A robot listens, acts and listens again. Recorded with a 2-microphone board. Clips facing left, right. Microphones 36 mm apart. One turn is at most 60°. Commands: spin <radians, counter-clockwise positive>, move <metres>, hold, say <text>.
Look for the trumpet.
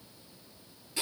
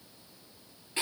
hold
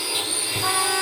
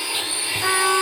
spin -1.05
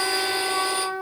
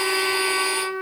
spin -0.87
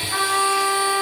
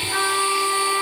say Found it: a trumpet, straight ahead, 2 to 4 m away.